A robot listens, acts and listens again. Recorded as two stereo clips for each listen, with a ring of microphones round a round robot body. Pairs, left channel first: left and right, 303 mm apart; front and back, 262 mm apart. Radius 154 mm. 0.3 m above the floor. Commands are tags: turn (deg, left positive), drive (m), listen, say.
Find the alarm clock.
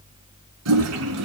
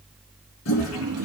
<listen/>
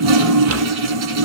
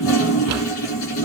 <listen/>
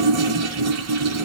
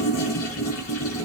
<say>I can't make out an alarm clock, only a drawer and a toilet flushing.</say>